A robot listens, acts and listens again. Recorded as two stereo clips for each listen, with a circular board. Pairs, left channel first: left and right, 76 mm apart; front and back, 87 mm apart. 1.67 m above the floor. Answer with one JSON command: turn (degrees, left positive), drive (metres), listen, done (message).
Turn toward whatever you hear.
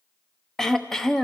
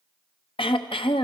{"done": "Facing the throat clearing, under 1 m away."}